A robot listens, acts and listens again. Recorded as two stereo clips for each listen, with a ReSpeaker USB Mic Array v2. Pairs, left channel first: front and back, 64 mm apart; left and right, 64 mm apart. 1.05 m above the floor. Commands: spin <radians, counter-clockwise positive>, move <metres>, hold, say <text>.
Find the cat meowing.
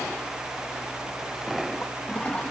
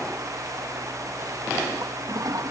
hold
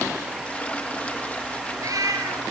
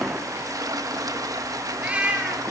spin -2.79
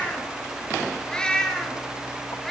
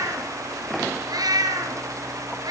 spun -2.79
spin -1.48
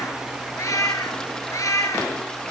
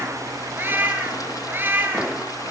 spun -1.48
spin -0.52
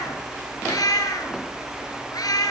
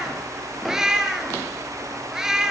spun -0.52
spin -0.17
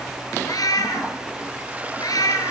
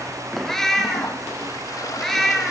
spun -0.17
say Found it: a cat meowing, straight ahead, over 4 m away.